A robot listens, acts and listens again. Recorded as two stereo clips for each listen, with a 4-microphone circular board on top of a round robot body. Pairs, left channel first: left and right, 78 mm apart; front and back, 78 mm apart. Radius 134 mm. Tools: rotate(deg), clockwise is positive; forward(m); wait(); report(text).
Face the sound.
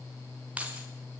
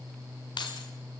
rotate(15)
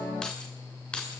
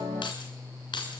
rotate(-15)
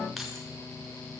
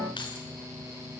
report("Facing the keys jangling.")